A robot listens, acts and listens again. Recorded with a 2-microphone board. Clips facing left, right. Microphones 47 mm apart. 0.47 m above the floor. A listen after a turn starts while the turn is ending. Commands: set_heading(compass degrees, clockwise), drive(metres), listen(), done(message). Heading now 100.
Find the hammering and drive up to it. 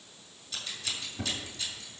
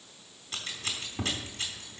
listen()
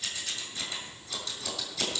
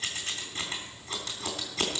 listen()
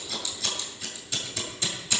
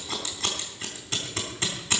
done("I can't make out hammering to turn to.")